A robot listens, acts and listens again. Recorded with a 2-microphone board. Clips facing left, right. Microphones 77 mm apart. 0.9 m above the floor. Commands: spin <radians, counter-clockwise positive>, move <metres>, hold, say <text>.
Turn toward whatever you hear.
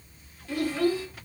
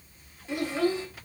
spin -0.44
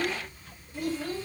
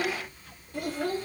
spin -2.09
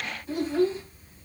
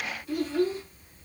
spin 0.61
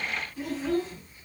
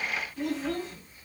say Facing the child speaking, over 4 m away.